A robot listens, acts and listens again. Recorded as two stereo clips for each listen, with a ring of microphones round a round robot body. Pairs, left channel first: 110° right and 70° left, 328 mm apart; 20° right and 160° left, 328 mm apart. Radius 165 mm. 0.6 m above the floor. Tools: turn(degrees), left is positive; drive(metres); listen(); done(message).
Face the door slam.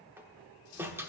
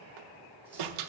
turn(degrees=150)
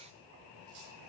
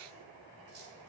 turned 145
done("Facing where the door slam came from. I can't hear it now.")